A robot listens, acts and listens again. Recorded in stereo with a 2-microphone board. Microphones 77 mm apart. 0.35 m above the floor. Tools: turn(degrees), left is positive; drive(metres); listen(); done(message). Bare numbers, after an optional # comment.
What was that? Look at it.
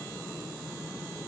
listen()
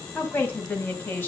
# The woman speaking: about 25° left or 155° left.
turn(25)
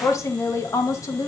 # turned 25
# So it is at 135° left.
turn(135)
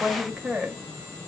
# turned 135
done("Found it: a woman speaking, straight ahead.")